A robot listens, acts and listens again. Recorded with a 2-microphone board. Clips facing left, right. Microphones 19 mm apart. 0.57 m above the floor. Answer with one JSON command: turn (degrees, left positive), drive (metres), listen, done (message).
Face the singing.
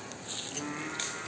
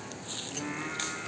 {"turn": -30}
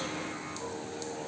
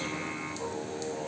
{"turn": -140}
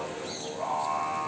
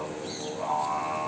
{"done": "Found it: singing, straight ahead, over 4 m away."}